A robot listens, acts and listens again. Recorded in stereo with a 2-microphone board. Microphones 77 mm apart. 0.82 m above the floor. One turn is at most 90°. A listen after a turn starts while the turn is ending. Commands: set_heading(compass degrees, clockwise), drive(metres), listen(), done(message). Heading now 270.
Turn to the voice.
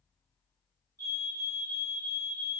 listen()
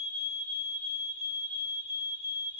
listen()
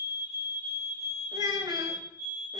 set_heading(340)
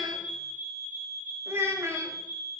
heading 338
set_heading(13)
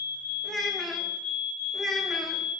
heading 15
done("Found it: a child speaking, straight ahead.")